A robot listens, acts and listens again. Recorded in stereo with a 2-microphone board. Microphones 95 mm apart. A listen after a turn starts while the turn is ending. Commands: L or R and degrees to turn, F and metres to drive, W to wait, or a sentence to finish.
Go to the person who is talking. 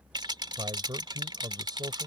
R45
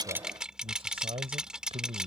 R90
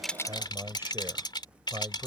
R30
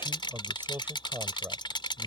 R25
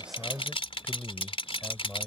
L20
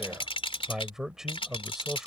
F1.0
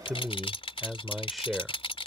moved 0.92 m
F1.0
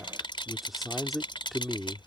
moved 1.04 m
F1.0
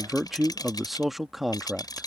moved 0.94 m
F1.0
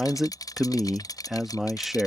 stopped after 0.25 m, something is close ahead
I am next to the man speaking.